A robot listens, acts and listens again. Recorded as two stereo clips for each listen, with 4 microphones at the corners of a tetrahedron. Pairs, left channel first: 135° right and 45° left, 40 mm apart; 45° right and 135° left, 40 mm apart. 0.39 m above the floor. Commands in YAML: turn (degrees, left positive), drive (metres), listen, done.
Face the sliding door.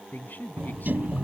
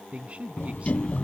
turn: 10
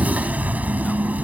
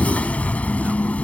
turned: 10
done: "Facing the sliding door."